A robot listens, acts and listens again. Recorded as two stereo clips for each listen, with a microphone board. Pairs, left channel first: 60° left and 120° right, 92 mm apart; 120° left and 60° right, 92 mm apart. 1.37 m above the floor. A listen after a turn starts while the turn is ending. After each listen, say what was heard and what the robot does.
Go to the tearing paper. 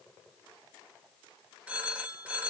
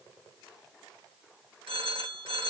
Keep listening.
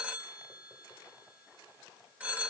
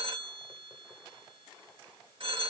Keep listening.
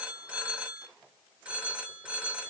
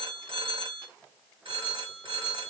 I can't make out tearing paper to turn to.